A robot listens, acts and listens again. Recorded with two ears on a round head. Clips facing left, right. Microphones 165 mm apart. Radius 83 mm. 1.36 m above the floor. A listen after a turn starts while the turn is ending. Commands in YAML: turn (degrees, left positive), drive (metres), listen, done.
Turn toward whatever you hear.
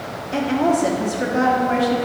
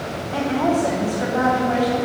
turn: 30
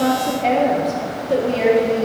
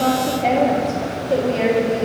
done: "Found it: a woman speaking, straight ahead, 1 to 2 m away."